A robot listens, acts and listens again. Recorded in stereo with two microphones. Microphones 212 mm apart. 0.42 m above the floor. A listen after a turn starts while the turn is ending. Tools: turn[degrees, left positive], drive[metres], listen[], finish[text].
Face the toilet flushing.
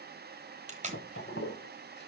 Thought: The toilet flushing: about 55° left or 125° left.
Action: turn[55]
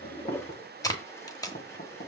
Thought: So it is at 15° left.
Action: turn[15]
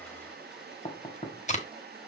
Action: listen[]
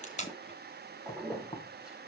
Action: finish[Facing the toilet flushing.]